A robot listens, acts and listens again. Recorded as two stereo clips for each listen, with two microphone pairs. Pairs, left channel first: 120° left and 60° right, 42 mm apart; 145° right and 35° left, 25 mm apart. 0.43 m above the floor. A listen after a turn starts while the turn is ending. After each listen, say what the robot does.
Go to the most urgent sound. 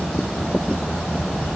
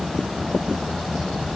Keep listening.
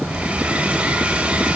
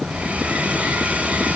Keep listening.
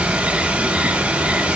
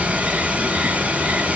I can't make out anything urgent to turn to.